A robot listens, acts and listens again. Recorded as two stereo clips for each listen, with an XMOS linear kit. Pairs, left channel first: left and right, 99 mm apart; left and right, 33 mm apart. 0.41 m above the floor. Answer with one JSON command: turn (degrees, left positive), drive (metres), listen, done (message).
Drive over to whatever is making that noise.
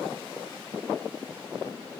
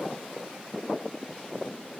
{"listen": true}
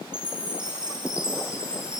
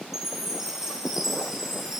{"turn": -30}
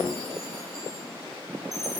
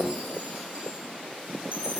{"turn": -135}
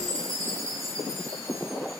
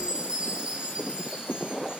{"turn": -40}
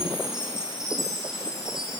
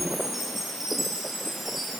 {"drive": 1.0}
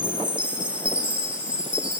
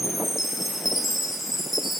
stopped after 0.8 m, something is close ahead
{"turn": -15}
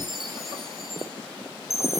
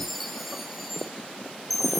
{"done": "I am next to the chime."}